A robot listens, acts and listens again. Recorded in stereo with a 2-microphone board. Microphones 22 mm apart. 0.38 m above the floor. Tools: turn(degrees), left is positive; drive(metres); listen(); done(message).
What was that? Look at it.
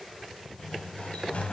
turn(degrees=65)
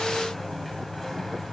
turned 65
turn(degrees=10)
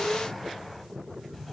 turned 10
done("Facing the sliding door.")